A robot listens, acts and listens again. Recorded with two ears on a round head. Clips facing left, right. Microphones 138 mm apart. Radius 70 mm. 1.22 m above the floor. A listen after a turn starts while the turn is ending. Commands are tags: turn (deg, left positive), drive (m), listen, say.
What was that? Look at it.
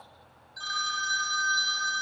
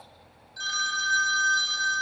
<turn deg="-20"/>
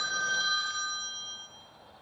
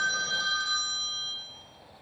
<say>Facing the phone ringing, 1 to 2 m away.</say>